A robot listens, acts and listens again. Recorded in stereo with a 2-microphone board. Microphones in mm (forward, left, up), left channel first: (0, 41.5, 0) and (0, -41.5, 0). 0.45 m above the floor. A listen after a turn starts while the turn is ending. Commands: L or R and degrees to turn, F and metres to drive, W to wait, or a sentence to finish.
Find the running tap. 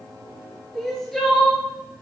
W
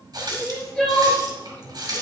R55
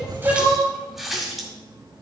Facing the running tap, 1 to 2 m away.